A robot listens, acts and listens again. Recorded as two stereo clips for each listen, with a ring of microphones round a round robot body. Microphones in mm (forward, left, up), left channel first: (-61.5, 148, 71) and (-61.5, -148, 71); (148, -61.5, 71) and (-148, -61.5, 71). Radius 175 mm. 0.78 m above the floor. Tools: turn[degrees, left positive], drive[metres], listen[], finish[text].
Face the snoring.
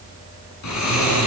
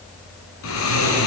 Thought: The snoring: 50° left.
Action: turn[50]
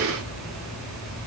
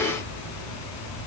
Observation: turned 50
Action: finish[Found it: snoring, straight ahead.]